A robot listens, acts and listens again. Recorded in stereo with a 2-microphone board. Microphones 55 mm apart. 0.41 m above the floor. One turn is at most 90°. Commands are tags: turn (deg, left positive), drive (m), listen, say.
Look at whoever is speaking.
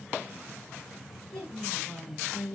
<turn deg="30"/>
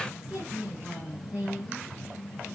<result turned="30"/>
<turn deg="-20"/>
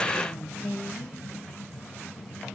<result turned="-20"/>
<say>Found it: a woman speaking, straight ahead.</say>